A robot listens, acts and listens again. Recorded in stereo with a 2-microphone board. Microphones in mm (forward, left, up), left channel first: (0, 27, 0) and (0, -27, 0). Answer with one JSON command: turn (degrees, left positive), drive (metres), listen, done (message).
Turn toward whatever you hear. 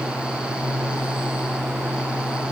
{"listen": true}
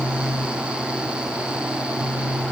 {"listen": true}
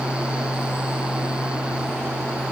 {"done": "I can't make out anything."}